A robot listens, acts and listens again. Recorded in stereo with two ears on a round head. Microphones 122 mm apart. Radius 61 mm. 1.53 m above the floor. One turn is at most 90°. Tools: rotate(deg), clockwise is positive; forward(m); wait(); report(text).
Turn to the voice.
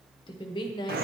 rotate(-35)
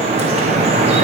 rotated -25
wait()
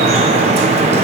wait()
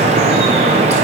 report("I heard a woman speaking, but can't make it out now. It was about 10° left or 120° left.")